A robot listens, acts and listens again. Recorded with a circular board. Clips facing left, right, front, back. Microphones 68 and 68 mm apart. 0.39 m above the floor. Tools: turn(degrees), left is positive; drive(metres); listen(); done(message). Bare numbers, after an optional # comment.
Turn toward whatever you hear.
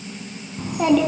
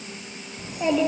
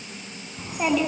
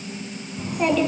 # The child speaking: 80° left.
turn(80)
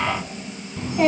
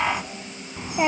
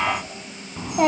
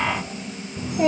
# The child speaking is now 20° right.
turn(-20)
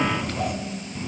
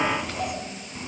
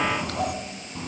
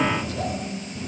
# The child speaking is now 10° right.
turn(-10)
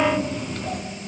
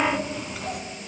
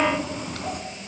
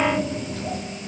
done("Found it: a child speaking, straight ahead, 2 to 4 m away.")